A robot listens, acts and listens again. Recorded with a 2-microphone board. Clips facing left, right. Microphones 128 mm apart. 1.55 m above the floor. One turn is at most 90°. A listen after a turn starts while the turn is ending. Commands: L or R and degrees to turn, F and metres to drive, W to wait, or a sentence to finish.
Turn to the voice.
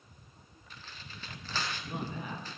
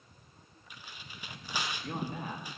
R40
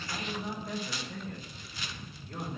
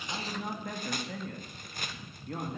R90
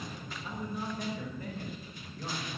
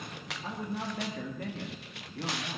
R80
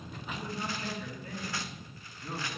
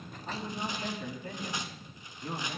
R30
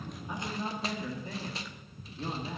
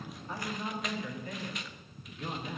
L20
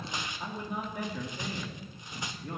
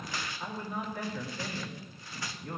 L10
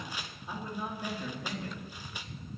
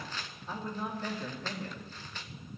Found it: a man speaking, straight ahead, 2 to 4 m away.